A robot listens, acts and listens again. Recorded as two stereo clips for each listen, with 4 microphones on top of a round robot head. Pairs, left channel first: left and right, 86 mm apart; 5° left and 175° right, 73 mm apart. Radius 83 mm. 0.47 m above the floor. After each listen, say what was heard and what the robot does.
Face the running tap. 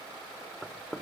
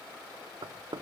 Keep listening.
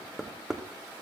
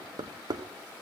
Keep listening.
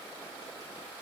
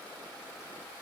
I can't make out a running tap to turn to.